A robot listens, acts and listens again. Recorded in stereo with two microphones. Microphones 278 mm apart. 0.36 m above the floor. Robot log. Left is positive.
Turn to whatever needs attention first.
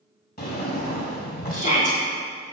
note: The shout: about 30° left or 150° left.
cmd yaw +30
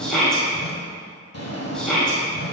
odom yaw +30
end: Facing the shout, 1 to 2 m away.